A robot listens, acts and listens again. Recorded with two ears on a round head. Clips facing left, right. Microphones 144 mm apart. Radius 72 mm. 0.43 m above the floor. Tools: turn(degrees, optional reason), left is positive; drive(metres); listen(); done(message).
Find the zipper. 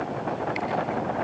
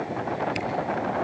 listen()
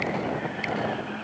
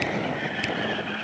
listen()
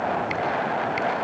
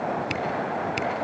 done("I can't make out a zipper, only a camera shutter.")